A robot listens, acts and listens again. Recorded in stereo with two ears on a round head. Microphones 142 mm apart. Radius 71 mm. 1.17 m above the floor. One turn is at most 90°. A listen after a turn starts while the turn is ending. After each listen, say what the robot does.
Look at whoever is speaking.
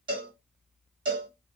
Keep listening.
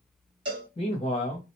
Turn 40° left.
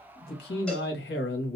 Turn 90° left.
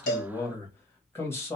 Turn 15° left.
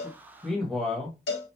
Found it: a man speaking, straight ahead, 1 to 2 m away.